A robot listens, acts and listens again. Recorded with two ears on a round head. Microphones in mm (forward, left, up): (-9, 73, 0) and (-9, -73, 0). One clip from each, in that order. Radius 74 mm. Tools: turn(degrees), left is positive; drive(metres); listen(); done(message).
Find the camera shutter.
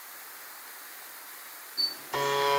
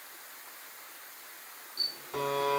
turn(degrees=-40)
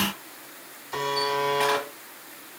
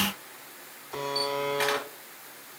listen()
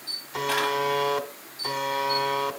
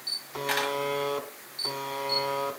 turn(degrees=-95)
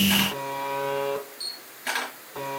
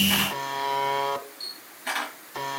done("Found it: a camera shutter, straight ahead.")